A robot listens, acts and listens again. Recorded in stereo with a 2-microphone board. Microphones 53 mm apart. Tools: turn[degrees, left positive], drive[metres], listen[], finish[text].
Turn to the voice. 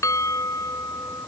Action: listen[]
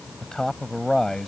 Action: turn[30]
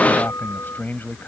Thought: So it is at 140° left.
Action: turn[140]
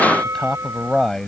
Thought: The man speaking is now 10° left.
Action: turn[10]
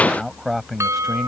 Action: finish[Found it: a man speaking, straight ahead.]